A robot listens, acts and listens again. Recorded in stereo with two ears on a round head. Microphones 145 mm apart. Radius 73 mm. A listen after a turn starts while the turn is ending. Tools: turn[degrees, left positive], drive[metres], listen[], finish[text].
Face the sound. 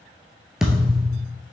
Action: turn[-30]
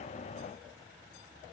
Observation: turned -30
Action: listen[]
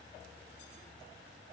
Action: finish[I heard a thud, but can't make it out now. It was about 25° left or 145° right.]